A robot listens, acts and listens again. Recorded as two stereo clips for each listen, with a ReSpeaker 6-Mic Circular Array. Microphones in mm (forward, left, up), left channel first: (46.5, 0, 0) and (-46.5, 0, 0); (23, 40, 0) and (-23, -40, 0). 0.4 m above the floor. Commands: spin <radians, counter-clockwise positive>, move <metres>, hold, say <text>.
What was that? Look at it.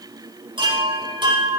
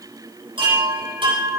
spin -2.53
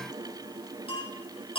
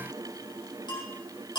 spin 0.35
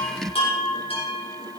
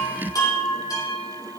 spin 0.17
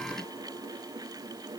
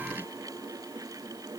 hold
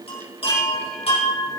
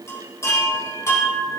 say Facing the chime.